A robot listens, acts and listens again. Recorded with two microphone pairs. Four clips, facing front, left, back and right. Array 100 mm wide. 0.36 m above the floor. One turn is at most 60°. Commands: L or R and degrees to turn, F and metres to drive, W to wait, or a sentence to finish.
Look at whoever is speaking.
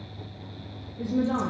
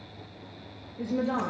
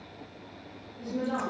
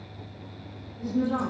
L60
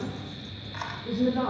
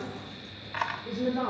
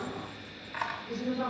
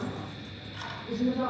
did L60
L55
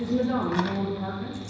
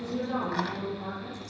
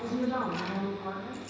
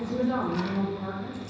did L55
R10
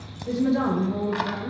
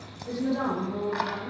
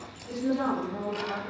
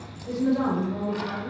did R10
Found it: a woman speaking, straight ahead.